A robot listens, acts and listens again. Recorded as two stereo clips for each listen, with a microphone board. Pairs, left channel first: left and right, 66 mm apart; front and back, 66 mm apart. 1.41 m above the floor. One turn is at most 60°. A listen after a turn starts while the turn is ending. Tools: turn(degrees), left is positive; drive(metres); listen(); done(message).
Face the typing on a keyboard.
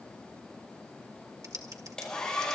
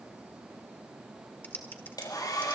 turn(degrees=-60)
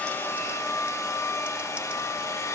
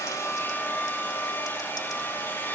listen()
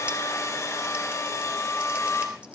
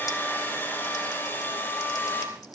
turn(degrees=-20)
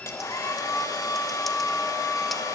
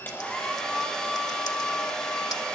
listen()
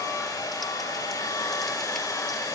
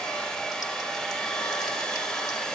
listen()
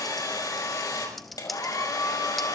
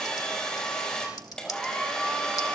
done("Facing where the typing on a keyboard came from. I can't hear it now.")